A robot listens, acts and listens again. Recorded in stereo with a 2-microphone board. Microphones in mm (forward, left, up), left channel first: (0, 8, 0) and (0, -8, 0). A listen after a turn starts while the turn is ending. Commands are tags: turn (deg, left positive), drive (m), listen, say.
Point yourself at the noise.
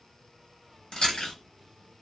<turn deg="60"/>
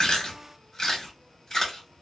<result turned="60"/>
<turn deg="40"/>
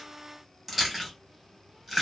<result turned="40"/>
<say>Facing the chewing, 1 to 2 m away.</say>